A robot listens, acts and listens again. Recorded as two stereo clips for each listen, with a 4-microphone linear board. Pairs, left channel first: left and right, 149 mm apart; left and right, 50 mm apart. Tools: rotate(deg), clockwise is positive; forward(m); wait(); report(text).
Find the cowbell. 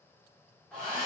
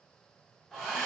wait()
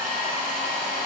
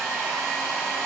wait()
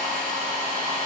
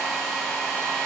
report("I can't make out a cowbell to turn to.")